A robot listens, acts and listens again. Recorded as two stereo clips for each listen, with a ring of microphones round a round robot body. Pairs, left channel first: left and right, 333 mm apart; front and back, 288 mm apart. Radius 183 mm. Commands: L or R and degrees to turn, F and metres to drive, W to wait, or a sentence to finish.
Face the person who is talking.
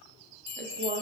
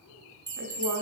R155
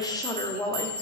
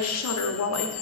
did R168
L15
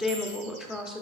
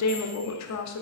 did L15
Found it: a woman speaking, straight ahead.